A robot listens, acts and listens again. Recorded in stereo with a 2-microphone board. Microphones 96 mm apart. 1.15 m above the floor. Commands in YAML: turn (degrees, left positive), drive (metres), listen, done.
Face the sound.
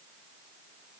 listen: true
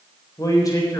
turn: 35
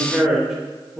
turn: -10
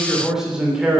turn: -10
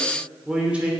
turn: -15
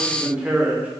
turn: -15
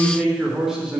done: "Facing the man speaking."